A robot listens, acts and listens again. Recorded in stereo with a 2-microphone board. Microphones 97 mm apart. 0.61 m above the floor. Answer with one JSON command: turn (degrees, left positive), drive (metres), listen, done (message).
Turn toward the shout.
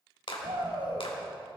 {"turn": -60}
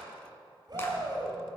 {"turn": -50}
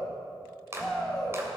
{"done": "Facing the shout."}